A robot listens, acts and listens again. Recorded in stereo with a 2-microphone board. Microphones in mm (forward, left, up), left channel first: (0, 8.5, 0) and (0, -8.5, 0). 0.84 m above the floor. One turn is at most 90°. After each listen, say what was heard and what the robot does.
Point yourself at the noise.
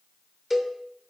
Turn 30° left.
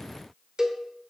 So it is at 30° right. Turn 30° right.
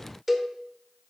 Facing the cowbell.